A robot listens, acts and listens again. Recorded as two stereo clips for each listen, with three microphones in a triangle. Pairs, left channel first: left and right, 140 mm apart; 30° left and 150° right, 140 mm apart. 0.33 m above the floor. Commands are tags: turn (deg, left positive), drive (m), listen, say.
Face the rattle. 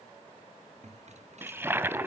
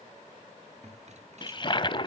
<turn deg="-120"/>
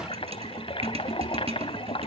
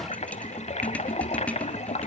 <turn deg="-50"/>
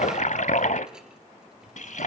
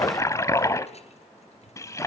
<say>Found it: a rattle, straight ahead, 2 to 4 m away.</say>